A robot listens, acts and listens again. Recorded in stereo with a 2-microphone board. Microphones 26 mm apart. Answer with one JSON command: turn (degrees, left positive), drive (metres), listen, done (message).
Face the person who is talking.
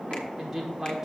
{"turn": -20}
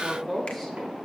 {"done": "Found it: a woman speaking, straight ahead, 1 to 2 m away."}